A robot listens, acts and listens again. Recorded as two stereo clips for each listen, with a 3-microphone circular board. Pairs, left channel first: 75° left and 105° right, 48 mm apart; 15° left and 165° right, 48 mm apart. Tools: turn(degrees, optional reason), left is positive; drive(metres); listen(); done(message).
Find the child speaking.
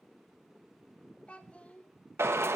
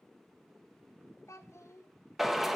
turn(degrees=15, reason="The child speaking: 15° left.")
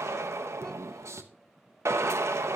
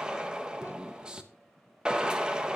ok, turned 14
listen()
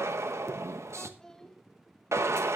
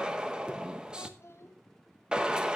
done("Found it: a child speaking, straight ahead, 1 to 2 m away.")